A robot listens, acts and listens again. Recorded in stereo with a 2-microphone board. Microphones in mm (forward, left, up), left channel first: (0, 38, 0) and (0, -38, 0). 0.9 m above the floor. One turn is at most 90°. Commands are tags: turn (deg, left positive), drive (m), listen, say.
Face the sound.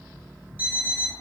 <turn deg="-25"/>
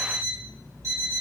<turn deg="-90"/>
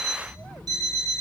<turn deg="-60"/>
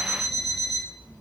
<say>Found it: an alarm clock, straight ahead, 1 to 2 m away.</say>